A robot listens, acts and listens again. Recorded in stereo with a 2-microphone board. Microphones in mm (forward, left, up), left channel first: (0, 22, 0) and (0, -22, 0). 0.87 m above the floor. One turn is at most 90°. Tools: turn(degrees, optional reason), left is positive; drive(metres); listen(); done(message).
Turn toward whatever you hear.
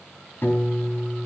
turn(degrees=55, reason="The piano: about 55° left or 125° left.")
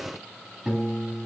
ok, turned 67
turn(degrees=-10, reason="So it is at 10° right.")
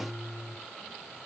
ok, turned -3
done("Facing the piano.")